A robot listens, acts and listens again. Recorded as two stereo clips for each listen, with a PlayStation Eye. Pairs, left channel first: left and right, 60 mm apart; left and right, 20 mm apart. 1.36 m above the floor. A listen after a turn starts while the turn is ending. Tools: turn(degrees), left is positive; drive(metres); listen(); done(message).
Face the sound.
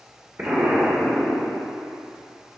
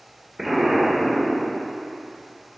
turn(degrees=-30)
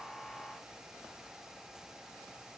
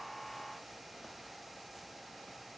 listen()
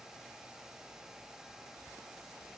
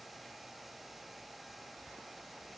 done("I heard an explosion, but can't make it out now. It was about straight ahead or 120° right.")